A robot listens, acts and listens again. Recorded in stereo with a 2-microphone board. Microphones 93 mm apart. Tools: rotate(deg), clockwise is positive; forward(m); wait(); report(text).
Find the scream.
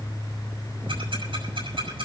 wait()
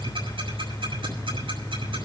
wait()
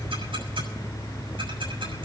report("I can't make out a scream, only ticking.")